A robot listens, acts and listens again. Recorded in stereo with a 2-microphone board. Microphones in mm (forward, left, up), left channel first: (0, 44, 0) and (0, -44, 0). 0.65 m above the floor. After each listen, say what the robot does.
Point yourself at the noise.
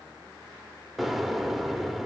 Turn 30° right.
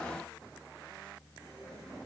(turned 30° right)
Keep listening.
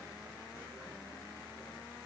I heard an explosion, but can't make it out now. It was about 25° left or 145° right.